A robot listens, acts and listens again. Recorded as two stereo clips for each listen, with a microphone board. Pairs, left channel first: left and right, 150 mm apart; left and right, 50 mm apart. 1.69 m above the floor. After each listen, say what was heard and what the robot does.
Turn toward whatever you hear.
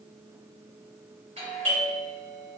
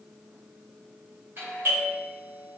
The doorbell: about 45° right or 135° right. Turn 45° right.
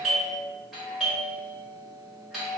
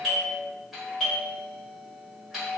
Facing the doorbell.